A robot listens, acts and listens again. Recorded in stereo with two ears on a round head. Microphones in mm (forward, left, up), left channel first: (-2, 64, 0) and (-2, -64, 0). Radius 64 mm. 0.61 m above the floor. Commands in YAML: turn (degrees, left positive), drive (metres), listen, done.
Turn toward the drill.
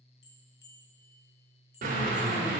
turn: -60
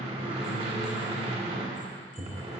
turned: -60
turn: -50
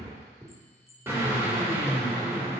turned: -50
turn: -15
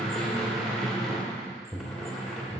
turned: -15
done: "Found it: a drill, straight ahead."